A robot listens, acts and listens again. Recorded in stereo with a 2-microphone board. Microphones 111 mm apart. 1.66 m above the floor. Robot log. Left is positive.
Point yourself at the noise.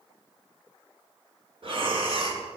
note: The breathing: about 55° right or 125° right.
cmd yaw -55
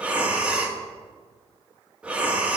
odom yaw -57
note: So it is at 10° right.
cmd yaw -10
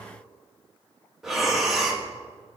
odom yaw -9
end: Facing the breathing, 1 to 2 m away.